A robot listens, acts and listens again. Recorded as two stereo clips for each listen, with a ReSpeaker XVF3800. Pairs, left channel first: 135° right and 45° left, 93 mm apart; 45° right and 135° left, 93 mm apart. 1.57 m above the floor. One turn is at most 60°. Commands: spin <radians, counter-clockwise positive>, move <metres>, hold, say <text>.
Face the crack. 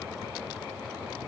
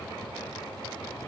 hold
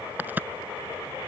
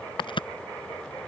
spin -0.44
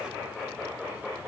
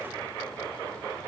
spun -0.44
say Facing where the crack came from. I can't hear it now.